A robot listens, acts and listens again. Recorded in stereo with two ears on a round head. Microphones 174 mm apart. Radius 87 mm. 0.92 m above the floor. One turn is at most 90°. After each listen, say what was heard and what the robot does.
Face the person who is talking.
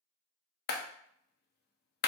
Keep listening.
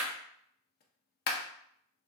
Keep listening.
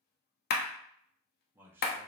Turn 30° right.
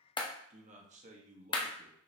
So it is at 140° right. Turn 90° right.
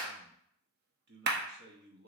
The man speaking is now 60° right. Turn 60° right.
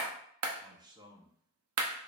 The man speaking is now 20° right. Turn 20° right.
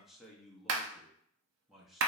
Facing the man speaking, 1 to 2 m away.